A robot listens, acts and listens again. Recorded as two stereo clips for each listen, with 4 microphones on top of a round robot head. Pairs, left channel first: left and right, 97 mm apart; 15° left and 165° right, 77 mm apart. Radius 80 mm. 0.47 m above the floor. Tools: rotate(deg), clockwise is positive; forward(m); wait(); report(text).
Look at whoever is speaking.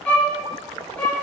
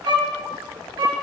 wait()
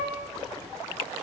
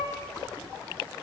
wait()
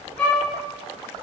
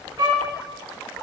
report("I can't make out anyone speaking, only a violin.")